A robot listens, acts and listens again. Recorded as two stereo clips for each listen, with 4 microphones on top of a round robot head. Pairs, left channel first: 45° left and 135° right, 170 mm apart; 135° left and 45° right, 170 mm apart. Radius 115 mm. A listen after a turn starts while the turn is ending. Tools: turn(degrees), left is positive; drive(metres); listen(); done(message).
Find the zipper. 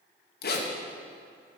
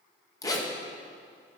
turn(degrees=65)
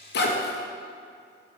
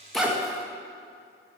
listen()
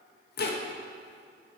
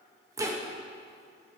turn(degrees=25)
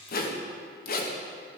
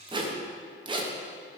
turn(degrees=15)
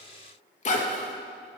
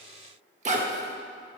done("Found it: a zipper, straight ahead, 1 to 2 m away.")